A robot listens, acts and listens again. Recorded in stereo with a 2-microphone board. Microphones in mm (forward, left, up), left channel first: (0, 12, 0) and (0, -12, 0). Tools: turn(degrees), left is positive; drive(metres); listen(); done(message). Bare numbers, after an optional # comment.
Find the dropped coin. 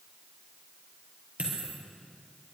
# The dropped coin: about 75° right or 105° right.
turn(-75)
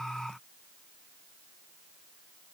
listen()
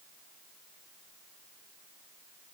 done("I heard a dropped coin, but can't make it out now. It was about straight ahead or 30° right.")